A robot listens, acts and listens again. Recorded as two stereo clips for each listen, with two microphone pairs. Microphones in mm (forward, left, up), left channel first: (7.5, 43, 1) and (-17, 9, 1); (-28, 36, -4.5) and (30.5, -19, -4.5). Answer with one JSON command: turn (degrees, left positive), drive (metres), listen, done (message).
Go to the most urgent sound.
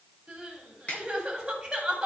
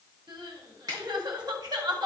{"turn": -60}
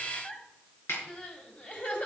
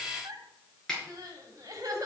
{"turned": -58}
{"drive": 1.0}
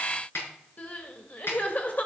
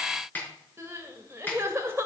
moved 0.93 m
{"turn": 10}
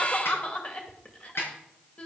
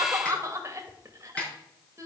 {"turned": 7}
{"drive": 1.0}
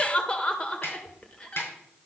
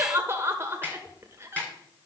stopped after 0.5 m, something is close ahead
{"done": "Arrived at the crying, straight ahead."}